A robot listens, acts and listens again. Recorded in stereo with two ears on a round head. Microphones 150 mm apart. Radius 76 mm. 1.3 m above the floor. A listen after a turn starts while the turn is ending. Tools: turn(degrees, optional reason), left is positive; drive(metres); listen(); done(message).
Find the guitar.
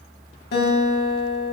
turn(degrees=70, reason="The guitar: about 70° left or 110° left.")
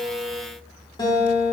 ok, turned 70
turn(degrees=25, reason="So it is at 25° left.")
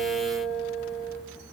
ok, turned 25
done("Found it: a guitar, straight ahead, 1 to 2 m away.")